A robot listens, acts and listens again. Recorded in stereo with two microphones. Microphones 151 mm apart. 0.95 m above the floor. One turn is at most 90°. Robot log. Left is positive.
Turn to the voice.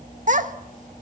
note: The child speaking: about 55° right or 125° right.
cmd yaw -55
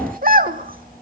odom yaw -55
note: So it is at 70° right.
cmd yaw -70
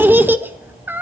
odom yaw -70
note: The child speaking is now 15° right.
cmd yaw -15
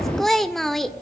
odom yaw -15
end: Facing the child speaking, 1 to 2 m away.